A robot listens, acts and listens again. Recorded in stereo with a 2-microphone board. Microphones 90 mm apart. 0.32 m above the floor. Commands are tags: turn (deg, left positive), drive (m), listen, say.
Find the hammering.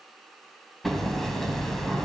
<turn deg="30"/>
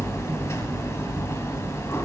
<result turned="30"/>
<turn deg="145"/>
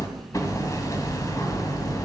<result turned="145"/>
<turn deg="45"/>
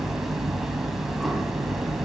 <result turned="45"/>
<say>Facing the hammering.</say>